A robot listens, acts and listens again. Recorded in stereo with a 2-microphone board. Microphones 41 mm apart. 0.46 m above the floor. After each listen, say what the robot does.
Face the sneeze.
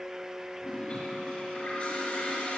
Keep listening.
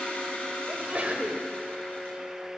Turn 35° right.
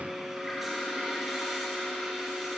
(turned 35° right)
Keep listening.
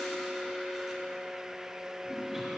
I heard a sneeze, but can't make it out now. It was about straight ahead or 110° right.